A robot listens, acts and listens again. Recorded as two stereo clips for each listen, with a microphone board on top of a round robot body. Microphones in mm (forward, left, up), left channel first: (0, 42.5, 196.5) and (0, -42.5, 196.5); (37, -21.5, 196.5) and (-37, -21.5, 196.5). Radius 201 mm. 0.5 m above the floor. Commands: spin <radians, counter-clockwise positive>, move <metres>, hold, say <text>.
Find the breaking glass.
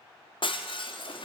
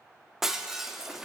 spin 1.66
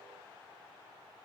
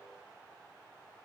say I heard breaking glass from this way, but can't make it out now.